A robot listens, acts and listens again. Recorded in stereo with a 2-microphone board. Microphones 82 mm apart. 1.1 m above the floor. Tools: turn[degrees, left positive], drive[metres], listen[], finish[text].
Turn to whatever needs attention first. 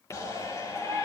Thought: The shout: about 35° left or 145° left.
Action: turn[35]
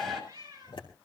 Action: finish[Facing the shout.]